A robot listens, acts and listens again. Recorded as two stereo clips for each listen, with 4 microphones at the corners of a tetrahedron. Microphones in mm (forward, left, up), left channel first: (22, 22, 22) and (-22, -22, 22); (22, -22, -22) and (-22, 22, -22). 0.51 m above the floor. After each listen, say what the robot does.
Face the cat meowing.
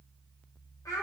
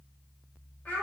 Keep listening.
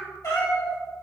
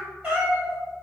Turn 60° left.
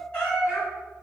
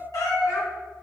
Turn 30° right.
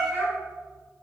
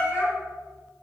Facing the cat meowing, 2 to 4 m away.